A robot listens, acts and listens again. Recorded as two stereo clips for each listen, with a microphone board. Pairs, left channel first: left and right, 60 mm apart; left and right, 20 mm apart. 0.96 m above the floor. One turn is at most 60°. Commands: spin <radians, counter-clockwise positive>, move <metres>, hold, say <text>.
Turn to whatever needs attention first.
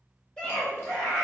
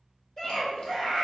spin 0.26
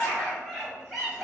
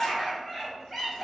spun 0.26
say Found it: a scream, straight ahead.